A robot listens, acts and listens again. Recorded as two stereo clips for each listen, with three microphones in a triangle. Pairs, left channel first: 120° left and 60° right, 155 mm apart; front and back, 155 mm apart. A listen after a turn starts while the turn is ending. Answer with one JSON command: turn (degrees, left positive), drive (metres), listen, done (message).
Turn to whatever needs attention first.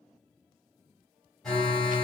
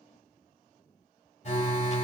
{"turn": 35}
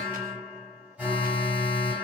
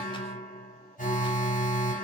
{"turn": 20}
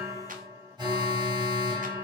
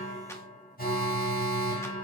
{"done": "Found it: an alarm, straight ahead."}